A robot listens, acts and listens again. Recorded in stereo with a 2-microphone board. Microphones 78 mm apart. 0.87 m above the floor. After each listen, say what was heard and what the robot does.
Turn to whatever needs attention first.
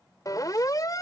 The siren: about 50° left or 130° left. Turn 50° left.
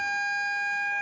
Facing the siren.